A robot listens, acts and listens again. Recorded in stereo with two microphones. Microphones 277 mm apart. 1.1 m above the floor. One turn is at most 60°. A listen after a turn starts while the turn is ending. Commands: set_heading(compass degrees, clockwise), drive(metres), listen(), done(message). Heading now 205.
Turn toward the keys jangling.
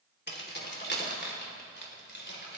set_heading(165)
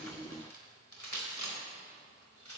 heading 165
set_heading(105)
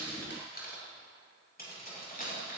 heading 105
set_heading(70)
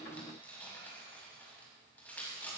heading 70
done("Found it: keys jangling, straight ahead, over 4 m away.")